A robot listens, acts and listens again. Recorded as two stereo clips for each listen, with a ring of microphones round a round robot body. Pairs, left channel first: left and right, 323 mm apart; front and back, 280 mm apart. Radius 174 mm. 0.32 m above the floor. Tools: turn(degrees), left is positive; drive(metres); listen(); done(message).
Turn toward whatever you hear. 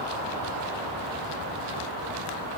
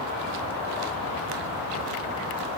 listen()
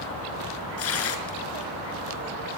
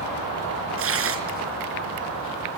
turn(degrees=140)
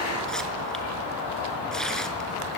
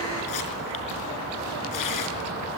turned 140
done("Found it: tearing paper, straight ahead.")